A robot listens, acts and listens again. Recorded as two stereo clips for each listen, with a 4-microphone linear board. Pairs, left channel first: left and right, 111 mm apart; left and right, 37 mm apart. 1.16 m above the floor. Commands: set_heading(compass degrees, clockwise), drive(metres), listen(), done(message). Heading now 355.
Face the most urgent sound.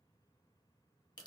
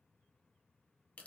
listen()
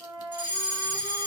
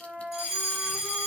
set_heading(10)
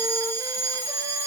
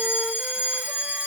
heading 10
set_heading(160)
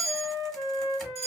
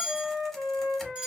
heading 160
set_heading(190)
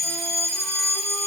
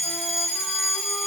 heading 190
done("Found it: a fire alarm, straight ahead.")